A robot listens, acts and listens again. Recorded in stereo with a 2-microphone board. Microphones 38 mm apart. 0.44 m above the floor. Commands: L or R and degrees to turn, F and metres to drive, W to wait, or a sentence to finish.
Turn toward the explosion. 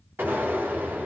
R90
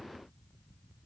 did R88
I heard an explosion from this way, but can't make it out now.